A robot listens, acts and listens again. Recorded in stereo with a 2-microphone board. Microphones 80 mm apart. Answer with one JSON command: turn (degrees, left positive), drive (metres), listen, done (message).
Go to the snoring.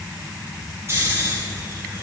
{"turn": -35}
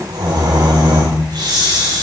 {"turn": -110}
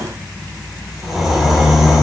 {"drive": 1.0}
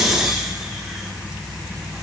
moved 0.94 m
{"drive": 1.0}
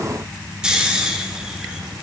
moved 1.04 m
{"turn": -10}
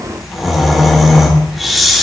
{"drive": 1.0}
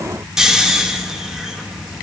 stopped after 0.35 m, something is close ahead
{"turn": -10}
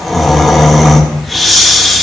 {"done": "I am next to the snoring."}